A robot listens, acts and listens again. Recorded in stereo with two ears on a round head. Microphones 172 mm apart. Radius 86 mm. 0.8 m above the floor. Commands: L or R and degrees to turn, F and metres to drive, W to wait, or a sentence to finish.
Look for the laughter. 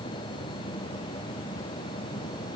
W
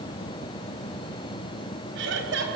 R70
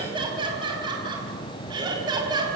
R25
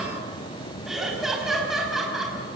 Found it: laughter, straight ahead, over 4 m away.